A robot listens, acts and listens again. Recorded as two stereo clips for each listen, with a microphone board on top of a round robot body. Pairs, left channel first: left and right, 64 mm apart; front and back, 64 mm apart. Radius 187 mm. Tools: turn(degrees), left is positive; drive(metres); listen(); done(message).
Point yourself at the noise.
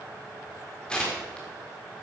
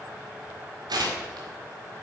turn(degrees=165)
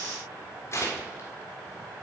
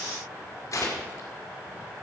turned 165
turn(degrees=40)
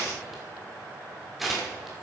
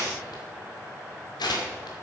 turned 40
done("Found it: tearing paper, straight ahead, 1 to 2 m away.")